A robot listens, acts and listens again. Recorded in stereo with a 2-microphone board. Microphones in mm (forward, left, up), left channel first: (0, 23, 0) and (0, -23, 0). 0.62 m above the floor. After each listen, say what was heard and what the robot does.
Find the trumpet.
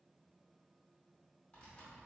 Keep listening.
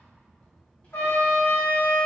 Turn 90° left.
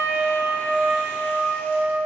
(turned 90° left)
Facing the trumpet, 1 to 2 m away.